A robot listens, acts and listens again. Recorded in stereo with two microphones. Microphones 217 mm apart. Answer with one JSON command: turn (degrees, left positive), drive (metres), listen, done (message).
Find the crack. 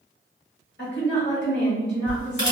{"turn": 55}
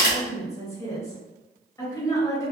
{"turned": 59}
{"turn": 60}
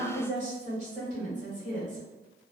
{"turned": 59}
{"done": "I heard a crack from this way, but can't make it out now."}